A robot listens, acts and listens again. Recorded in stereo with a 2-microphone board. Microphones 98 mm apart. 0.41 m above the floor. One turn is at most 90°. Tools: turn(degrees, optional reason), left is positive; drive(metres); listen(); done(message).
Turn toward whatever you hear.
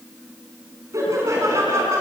turn(degrees=-30, reason="The laughter: about 30° right or 150° right.")
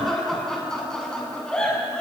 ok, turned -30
turn(degrees=10, reason="So it is at 10° left.")
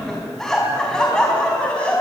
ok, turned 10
turn(degrees=10, reason="The laughter is now 10° left.")
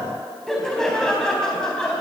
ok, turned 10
done("Facing the laughter, 2 to 4 m away.")